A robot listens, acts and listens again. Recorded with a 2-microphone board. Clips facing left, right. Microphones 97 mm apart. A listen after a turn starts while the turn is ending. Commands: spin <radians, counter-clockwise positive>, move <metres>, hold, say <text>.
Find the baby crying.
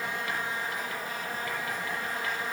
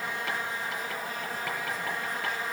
hold
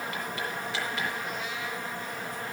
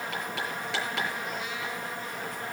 hold
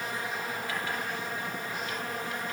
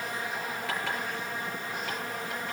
say I can't make out a baby crying, only writing.